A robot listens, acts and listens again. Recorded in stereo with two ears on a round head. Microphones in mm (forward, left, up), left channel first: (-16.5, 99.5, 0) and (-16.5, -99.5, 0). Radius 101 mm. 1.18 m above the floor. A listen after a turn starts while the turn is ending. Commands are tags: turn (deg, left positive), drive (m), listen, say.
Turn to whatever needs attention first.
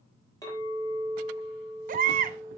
<turn deg="-40"/>
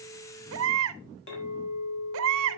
<turn deg="-100"/>
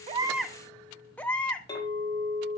<say>Found it: a baby crying, straight ahead, under 1 m away.</say>